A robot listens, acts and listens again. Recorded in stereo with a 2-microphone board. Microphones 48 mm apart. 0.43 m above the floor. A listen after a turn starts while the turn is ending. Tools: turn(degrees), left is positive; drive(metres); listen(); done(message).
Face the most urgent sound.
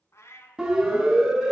turn(degrees=-30)
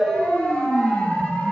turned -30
turn(degrees=20)
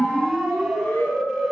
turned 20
done("Facing the siren, over 4 m away.")